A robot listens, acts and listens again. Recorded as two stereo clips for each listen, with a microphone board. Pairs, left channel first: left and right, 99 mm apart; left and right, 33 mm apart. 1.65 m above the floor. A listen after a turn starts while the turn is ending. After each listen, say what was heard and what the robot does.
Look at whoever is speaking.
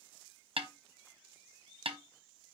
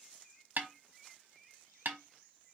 Keep listening.
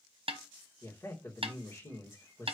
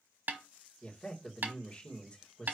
The man speaking: about 30° left or 150° left. Turn 30° left.
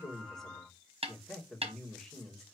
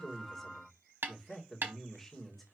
Facing the man speaking, 2 to 4 m away.